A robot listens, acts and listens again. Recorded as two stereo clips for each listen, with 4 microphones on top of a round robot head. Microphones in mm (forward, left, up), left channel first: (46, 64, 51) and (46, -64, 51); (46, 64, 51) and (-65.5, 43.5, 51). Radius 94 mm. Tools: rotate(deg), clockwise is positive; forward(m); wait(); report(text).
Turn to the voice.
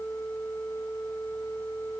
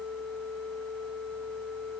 wait()
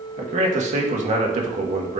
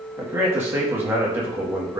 rotate(100)
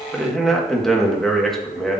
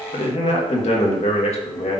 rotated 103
report("Found it: a man speaking, straight ahead, 1 to 2 m away.")